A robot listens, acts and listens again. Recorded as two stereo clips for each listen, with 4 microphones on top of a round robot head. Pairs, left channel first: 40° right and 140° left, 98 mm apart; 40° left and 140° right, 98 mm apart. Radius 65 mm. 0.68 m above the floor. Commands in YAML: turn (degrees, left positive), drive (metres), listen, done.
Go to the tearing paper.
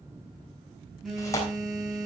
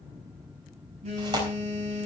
turn: -95
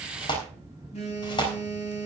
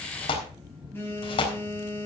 drive: 1.0
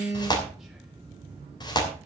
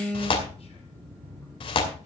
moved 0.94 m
turn: 10
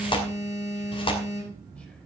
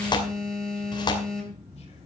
drive: 1.0
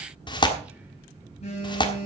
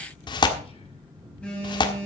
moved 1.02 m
drive: 1.0
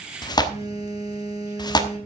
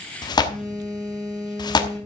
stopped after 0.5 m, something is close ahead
done: "Arrived at the tearing paper, straight ahead."